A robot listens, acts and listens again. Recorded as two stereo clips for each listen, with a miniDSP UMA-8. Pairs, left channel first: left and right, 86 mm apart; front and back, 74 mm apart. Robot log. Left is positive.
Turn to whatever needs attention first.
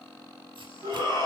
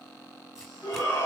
note: The shout: 45° left.
cmd yaw +45
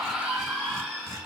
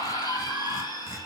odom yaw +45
end: Facing the shout, 2 to 4 m away.